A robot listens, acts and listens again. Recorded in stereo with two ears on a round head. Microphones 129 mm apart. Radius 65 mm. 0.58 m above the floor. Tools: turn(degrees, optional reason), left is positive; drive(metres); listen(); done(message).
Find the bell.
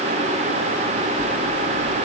turn(degrees=-90)
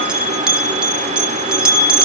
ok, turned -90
turn(degrees=-10, reason="So it is at 10° right.")
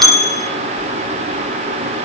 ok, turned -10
done("Found it: a bell, straight ahead.")